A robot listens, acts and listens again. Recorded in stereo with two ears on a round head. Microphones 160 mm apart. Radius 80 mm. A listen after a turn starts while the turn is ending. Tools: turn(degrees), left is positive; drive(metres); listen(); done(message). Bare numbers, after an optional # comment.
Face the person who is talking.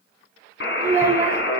turn(-30)
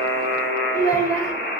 # So it is at 20° left.
turn(20)
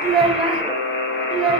done("Facing the child speaking, 2 to 4 m away.")